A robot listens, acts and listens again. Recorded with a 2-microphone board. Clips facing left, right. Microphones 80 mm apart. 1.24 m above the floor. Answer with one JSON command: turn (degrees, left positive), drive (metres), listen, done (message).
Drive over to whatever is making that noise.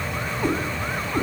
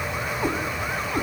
{"turn": -30}
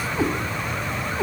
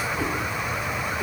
{"turn": 20}
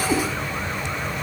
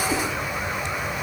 {"drive": 1.0}
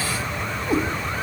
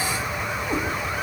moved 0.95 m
{"turn": 10}
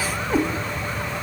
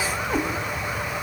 {"drive": 1.0}
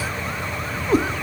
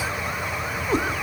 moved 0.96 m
{"drive": 1.0}
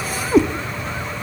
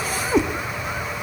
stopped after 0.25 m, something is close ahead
{"done": "I am next to the cat meowing."}